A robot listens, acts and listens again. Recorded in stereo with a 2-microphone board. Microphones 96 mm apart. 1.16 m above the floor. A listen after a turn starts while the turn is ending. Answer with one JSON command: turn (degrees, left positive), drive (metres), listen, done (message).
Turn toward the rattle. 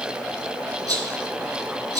{"turn": -40}
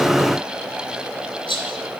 {"turn": -105}
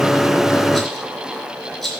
{"done": "Facing the rattle."}